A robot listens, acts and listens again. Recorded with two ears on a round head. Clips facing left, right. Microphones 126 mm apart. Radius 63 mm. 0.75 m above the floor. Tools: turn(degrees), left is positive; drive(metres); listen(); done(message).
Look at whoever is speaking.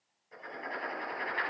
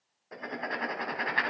listen()
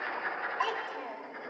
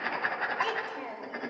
turn(degrees=-30)
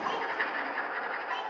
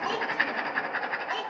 turn(degrees=-135)
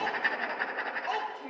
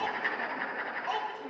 turn(degrees=15)
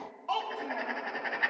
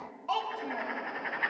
done("Found it: a child speaking, straight ahead, 2 to 4 m away.")